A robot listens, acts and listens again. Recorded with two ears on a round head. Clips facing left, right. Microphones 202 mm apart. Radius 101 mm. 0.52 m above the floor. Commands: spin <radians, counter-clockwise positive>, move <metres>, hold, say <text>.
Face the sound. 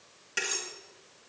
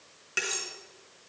spin -0.52
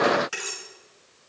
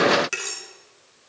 spin -2.53
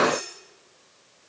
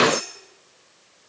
spin -0.79
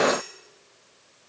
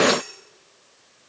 hold
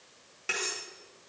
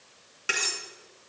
spin -0.26
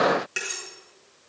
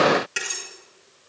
say Found it: cutlery clinking, straight ahead.